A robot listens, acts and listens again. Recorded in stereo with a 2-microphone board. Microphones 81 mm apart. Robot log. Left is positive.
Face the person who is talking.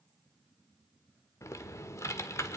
cmd idle
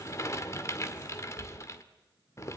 cmd idle
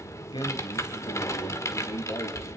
note: The man speaking: about 70° left or 110° left.
cmd yaw +70
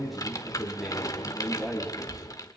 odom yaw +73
end: Found it: a man speaking, straight ahead.